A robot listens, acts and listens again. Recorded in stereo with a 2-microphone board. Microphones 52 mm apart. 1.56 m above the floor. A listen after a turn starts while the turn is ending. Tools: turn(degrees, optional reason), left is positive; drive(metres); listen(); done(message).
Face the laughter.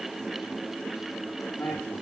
turn(degrees=55, reason="The laughter: about 55° left or 125° left.")
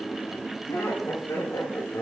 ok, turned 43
turn(degrees=85, reason="So it is at 85° left.")
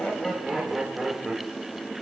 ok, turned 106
done("Facing the laughter, 2 to 4 m away.")